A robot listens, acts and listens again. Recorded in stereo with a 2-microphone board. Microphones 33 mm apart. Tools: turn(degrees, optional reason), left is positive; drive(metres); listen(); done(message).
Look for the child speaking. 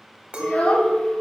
turn(degrees=50, reason="The child speaking: about 50° left or 130° left.")
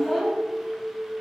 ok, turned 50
turn(degrees=-10, reason="So it is at 10° right.")
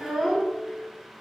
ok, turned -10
turn(degrees=-10, reason="The child speaking is now 10° right.")
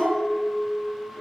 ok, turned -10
turn(degrees=-10, reason="The child speaking is now 10° right.")
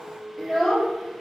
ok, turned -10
done("Found it: a child speaking, straight ahead, over 4 m away.")